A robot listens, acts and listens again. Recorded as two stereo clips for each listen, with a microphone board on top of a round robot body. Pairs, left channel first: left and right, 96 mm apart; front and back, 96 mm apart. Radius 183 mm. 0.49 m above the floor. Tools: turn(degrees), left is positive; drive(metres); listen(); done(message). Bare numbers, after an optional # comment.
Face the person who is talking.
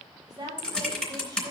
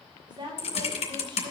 # The woman speaking: 140° right.
turn(-140)
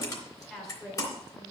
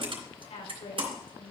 done("Facing the woman speaking.")